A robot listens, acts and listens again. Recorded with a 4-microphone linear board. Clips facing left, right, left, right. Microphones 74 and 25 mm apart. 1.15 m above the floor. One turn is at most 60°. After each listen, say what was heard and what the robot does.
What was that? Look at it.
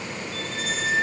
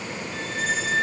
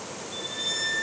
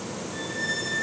The squeak: about 60° left or 120° left. Turn 60° left.
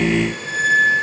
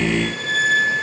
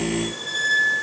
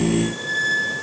So it is at 20° left. Turn 20° left.
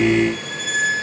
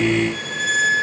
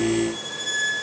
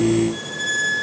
Facing the squeak.